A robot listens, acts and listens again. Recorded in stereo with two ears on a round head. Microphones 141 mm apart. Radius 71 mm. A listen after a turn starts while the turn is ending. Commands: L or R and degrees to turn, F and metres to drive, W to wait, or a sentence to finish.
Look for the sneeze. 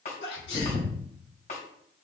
L70
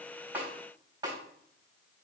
W
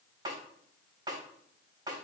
I heard a sneeze, but can't make it out now. It was about straight ahead or 40° left.